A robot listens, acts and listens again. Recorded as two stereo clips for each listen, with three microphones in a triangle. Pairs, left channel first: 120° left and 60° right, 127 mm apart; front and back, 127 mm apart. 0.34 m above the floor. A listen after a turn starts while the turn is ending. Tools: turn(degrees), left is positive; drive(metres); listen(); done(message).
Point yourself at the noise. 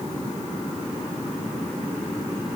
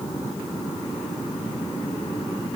listen()
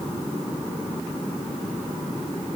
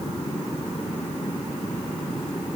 listen()
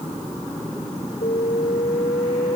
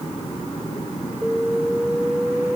turn(degrees=100)
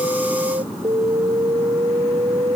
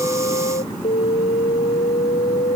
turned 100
turn(degrees=-15)
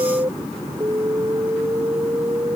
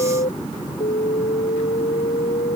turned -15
done("Facing the alarm.")